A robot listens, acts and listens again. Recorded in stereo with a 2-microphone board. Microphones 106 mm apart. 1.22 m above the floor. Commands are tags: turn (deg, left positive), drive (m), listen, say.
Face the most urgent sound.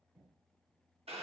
<listen/>
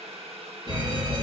<turn deg="-45"/>
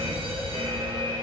<turn deg="-90"/>
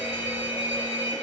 <turn deg="-20"/>
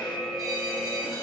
<say>Found it: a fire alarm, straight ahead.</say>